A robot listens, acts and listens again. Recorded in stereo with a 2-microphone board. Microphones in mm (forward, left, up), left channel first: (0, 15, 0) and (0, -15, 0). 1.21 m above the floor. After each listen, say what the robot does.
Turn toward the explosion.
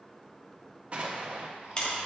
Turn 35° right.
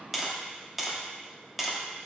Keep listening.
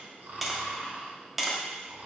I heard an explosion, but can't make it out now. It was about straight ahead or 110° right.